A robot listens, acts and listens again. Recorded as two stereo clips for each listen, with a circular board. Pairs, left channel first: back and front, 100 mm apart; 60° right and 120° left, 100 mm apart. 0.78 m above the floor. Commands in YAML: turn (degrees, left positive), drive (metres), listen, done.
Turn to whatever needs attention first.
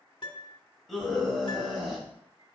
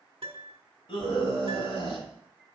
turn: -90
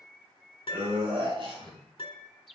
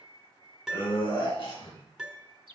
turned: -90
turn: -30
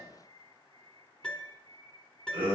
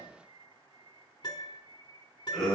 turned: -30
turn: 25
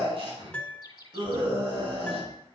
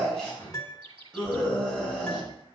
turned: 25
turn: 20
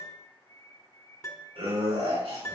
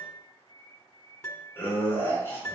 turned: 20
done: "Facing the scream."